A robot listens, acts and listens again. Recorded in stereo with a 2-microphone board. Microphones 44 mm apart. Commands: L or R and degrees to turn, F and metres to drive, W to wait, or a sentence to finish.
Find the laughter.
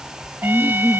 L30
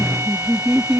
R20
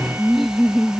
Facing the laughter.